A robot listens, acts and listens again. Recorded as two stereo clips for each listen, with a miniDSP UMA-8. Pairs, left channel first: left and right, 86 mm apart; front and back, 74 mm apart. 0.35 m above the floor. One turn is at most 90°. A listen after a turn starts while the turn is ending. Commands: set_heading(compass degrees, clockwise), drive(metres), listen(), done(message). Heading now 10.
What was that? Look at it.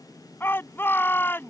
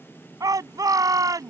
set_heading(280)
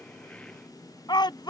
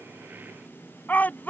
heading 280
set_heading(215)
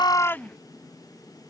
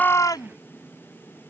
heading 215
listen()
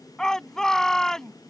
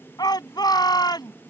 done("Facing the shout.")